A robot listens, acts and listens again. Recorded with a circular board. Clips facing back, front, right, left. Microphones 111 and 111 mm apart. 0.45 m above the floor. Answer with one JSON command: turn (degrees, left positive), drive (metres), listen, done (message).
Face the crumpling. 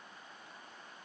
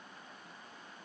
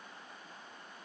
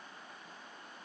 {"listen": true}
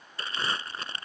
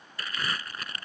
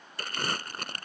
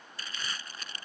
{"turn": -120}
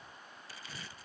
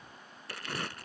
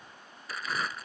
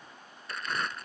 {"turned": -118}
{"done": "Found it: crumpling, straight ahead."}